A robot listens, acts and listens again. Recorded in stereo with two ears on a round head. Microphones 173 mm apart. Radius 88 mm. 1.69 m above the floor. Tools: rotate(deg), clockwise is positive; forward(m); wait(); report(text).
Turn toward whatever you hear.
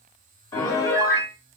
rotate(-20)
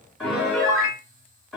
report("Found it: a piano, straight ahead.")